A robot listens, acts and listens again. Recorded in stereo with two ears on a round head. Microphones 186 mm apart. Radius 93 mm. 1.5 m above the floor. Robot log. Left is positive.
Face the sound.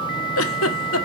note: The giggle: about 70° left or 110° left.
cmd yaw +70
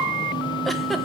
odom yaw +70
cmd idle
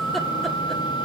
cmd idle
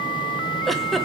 end: Found it: a giggle, straight ahead, 1 to 2 m away.